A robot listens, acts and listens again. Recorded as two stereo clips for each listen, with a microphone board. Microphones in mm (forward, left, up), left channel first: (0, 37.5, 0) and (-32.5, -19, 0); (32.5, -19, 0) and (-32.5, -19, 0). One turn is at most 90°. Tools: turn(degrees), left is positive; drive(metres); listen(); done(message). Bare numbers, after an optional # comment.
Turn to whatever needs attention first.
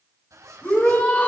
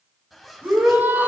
# The shout: 125° left.
turn(90)
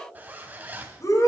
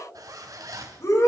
# The shout is now 30° left.
turn(30)
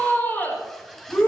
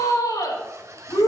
done("Facing the shout.")